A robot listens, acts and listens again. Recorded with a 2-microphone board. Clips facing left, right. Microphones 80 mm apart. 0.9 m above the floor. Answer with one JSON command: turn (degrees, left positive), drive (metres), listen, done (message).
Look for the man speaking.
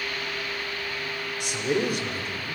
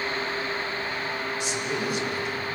{"turn": 60}
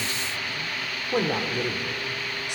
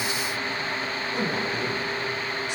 {"turn": 70}
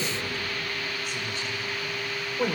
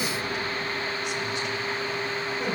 {"turn": 45}
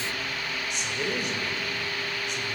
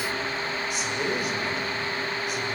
{"done": "Found it: a man speaking, straight ahead, over 4 m away."}